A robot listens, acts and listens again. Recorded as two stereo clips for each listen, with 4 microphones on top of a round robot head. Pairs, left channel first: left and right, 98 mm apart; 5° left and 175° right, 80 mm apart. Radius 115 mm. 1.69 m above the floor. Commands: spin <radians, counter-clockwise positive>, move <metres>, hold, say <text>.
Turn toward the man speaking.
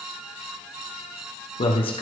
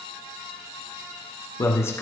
spin 1.13
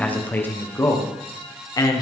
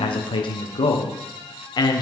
spin 0.70
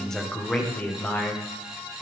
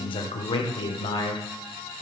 spin 0.35
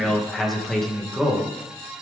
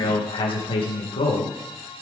say Facing the man speaking, 2 to 4 m away.